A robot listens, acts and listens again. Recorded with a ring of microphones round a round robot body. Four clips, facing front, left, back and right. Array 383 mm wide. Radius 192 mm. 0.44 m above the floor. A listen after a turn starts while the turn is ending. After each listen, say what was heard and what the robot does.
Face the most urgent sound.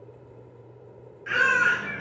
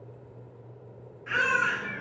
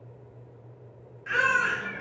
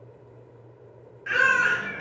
The baby crying: 85° right. Turn 85° right.
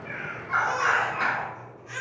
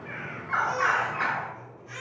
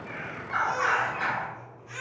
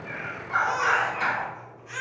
The baby crying is now 10° right. Turn 10° right.
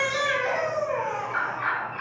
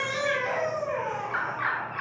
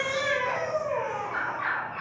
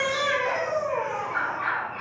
Found it: a baby crying, straight ahead, 1 to 2 m away.